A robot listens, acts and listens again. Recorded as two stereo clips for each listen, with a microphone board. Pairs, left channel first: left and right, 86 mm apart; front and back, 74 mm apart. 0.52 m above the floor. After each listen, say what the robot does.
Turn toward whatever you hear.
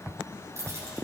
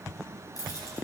Turn 35° right.
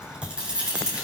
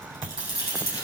Turn 15° right.
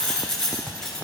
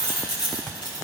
Facing the keys jangling, over 4 m away.